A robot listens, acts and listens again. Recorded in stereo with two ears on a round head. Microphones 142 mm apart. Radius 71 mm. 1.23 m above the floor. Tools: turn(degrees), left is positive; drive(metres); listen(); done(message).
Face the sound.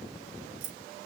turn(degrees=-90)
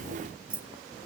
turn(degrees=-10)
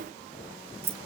turn(degrees=-20)
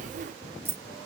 turn(degrees=-15)
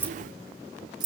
turn(degrees=-30)
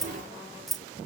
done("Found it: keys jangling, straight ahead.")